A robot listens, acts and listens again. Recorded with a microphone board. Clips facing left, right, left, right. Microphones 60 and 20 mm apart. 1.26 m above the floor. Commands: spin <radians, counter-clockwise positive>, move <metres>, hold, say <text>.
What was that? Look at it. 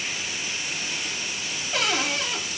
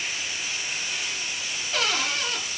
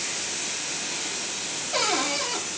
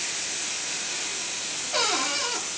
spin 0.52
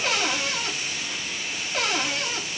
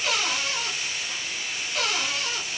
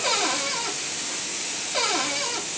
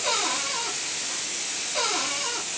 spin 2.53
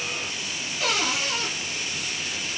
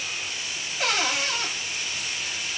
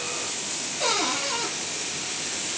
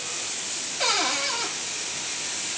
spin -0.70
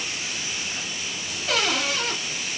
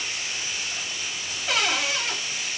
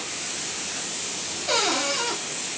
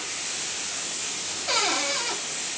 say Found it: a cupboard door, straight ahead, 1 to 2 m away.